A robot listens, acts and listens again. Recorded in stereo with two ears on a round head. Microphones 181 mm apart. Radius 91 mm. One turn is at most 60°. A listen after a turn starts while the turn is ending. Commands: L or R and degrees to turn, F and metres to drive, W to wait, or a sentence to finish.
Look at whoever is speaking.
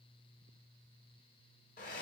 W
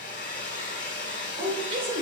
R30
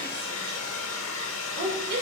R60
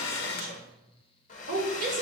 R45
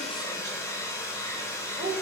R20
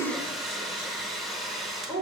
Found it: a woman speaking, straight ahead.